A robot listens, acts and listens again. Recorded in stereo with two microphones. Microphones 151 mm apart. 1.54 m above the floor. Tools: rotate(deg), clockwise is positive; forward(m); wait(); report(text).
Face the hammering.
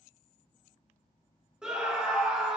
wait()
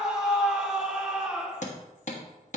rotate(-55)
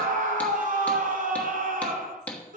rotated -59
rotate(-10)
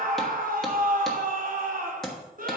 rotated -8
report("Found it: hammering, straight ahead, 1 to 2 m away.")